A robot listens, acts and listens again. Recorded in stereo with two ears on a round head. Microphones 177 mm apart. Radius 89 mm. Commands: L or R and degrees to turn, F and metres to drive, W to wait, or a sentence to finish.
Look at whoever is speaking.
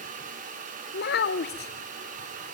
L55
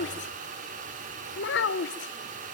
L65
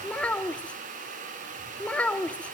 Facing the child speaking.